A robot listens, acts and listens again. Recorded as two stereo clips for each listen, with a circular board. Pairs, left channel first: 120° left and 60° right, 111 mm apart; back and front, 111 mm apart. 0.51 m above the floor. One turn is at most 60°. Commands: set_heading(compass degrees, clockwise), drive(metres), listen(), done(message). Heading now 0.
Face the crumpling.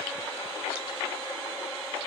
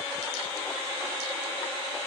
listen()
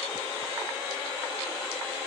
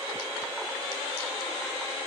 listen()
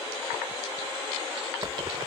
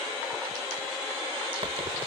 set_heading(25)
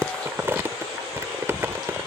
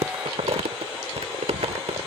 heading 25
done("Facing the crumpling.")